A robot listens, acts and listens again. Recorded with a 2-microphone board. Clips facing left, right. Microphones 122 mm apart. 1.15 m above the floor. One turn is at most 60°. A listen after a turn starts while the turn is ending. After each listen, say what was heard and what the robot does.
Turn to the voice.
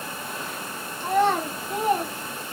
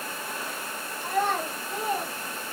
Turn 60° left.
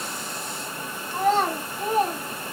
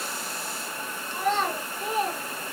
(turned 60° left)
So it is at 35° left. Turn 35° left.
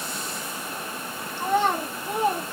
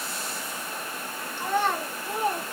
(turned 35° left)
The child speaking is now 20° left. Turn 20° left.
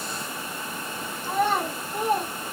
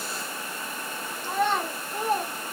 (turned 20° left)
Found it: a child speaking, straight ahead.